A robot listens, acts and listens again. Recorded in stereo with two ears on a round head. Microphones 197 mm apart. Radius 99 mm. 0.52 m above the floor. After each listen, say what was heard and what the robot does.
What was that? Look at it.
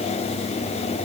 Keep listening.
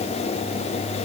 Keep listening.
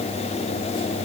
I can't make out anything.